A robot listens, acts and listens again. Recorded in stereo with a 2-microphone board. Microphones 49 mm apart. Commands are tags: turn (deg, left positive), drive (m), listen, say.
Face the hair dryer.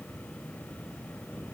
<listen/>
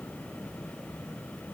<listen/>
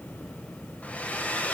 <turn deg="30"/>
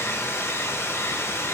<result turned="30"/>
<turn deg="120"/>
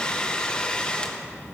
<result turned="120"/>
<turn deg="20"/>
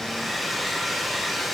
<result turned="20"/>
<say>Found it: a hair dryer, straight ahead.</say>